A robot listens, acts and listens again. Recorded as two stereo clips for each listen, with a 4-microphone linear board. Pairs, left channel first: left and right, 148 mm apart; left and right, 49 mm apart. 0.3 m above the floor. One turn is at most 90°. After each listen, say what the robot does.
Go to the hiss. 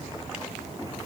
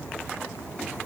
Keep listening.
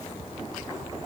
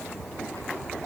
Keep listening.
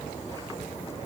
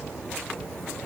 I can't make out a hiss to turn to.